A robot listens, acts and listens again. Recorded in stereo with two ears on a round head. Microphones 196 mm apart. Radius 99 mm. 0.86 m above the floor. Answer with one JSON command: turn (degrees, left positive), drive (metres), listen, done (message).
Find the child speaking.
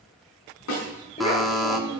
{"turn": 25}
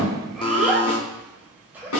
{"done": "Found it: a child speaking, straight ahead, 2 to 4 m away."}